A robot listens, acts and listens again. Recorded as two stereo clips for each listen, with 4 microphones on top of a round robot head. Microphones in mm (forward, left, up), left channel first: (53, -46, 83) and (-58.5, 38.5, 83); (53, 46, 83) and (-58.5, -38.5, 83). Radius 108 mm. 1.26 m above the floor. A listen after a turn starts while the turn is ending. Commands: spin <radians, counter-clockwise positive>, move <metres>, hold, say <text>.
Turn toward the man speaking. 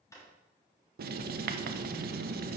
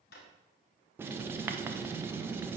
hold
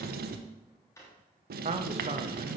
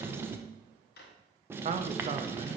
spin 3.14
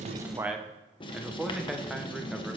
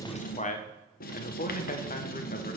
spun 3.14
spin 0.96
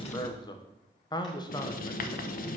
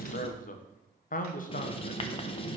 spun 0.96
spin 0.35
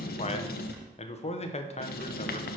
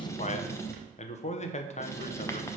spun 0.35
say Facing the man speaking.